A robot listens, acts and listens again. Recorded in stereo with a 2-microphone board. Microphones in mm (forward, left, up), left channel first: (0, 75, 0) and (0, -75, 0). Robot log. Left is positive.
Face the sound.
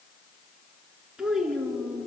cmd yaw +30
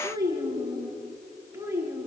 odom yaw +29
note: So it is at 15° right.
cmd yaw -15
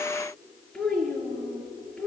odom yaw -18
end: Facing the child speaking, over 4 m away.